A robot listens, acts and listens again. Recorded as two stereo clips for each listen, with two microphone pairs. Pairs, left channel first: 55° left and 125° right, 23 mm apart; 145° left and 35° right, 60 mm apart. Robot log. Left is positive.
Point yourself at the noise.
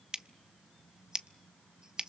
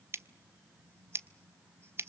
note: The scissors: 70° right.
cmd yaw -70
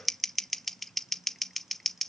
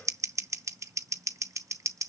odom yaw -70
note: The scissors is now 20° right.
cmd yaw -20
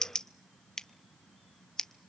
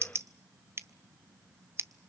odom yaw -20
end: Found it: scissors, straight ahead.